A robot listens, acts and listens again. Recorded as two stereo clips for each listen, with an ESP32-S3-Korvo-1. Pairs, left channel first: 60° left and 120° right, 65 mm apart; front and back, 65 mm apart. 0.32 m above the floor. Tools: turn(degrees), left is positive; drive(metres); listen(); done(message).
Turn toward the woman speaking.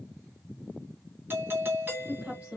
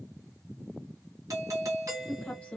turn(degrees=-60)
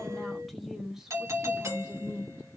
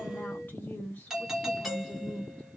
turn(degrees=-70)
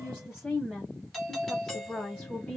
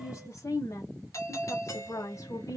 turn(degrees=-15)
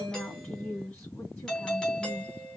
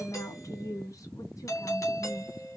done("Found it: a woman speaking, straight ahead, 1 to 2 m away.")